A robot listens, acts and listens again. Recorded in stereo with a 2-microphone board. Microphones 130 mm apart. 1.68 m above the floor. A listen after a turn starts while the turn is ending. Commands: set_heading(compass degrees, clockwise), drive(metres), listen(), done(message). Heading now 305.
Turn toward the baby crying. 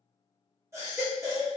set_heading(325)
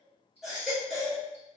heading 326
done("Facing the baby crying.")